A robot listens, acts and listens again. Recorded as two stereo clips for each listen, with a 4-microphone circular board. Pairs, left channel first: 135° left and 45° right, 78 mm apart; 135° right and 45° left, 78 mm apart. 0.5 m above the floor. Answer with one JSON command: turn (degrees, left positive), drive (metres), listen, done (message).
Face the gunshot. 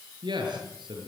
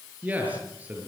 {"listen": true}
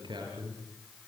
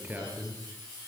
{"listen": true}
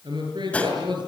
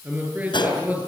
{"turn": -150}
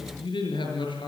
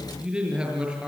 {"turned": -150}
{"done": "Facing where the gunshot came from. I can't hear it now."}